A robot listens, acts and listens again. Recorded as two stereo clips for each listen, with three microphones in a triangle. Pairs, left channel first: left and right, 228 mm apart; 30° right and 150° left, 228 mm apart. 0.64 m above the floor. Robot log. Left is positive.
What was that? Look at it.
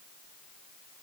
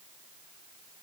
cmd idle
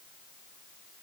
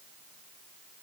cmd idle
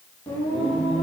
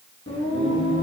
end: Facing the singing.